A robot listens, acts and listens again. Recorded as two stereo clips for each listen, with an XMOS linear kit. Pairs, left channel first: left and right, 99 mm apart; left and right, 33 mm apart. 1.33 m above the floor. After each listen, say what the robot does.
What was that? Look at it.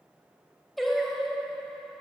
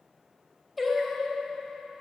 Turn 30° left.
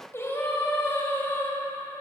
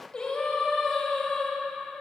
Turn 150° left.
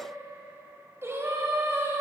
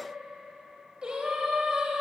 Turn 30° right.
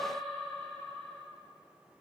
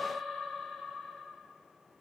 Facing the singing, 2 to 4 m away.